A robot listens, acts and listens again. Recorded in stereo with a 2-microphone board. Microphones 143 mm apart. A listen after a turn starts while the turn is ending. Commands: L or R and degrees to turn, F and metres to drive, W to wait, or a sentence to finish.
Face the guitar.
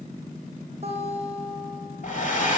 R45
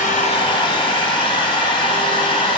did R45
W
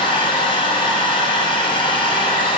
W
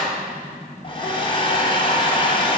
I heard a guitar, but can't make it out now. It was about straight ahead or 90° right.